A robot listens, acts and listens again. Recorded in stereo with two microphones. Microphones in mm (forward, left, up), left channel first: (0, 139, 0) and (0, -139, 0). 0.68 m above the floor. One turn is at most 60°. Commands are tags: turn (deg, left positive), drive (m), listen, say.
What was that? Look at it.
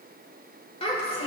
<turn deg="20"/>
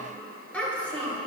<turn deg="30"/>
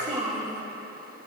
<turn deg="-25"/>
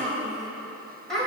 <say>Facing the child speaking, over 4 m away.</say>